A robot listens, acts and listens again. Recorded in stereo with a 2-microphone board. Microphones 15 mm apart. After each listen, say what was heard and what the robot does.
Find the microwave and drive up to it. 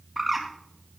Keep listening.
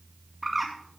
Keep listening.
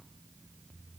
I can't make out a microwave to turn to.